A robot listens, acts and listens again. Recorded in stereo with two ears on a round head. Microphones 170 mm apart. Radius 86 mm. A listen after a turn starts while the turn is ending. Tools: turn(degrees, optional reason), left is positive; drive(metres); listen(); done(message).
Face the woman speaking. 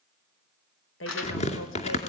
turn(degrees=75, reason="The woman speaking: about 75° left or 105° left.")
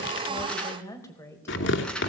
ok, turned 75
turn(degrees=15, reason="So it is at 15° left.")
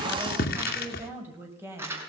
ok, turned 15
turn(degrees=-15, reason="The woman speaking is now 15° right.")
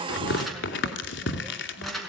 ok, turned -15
listen()
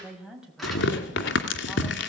done("Facing the woman speaking, over 4 m away.")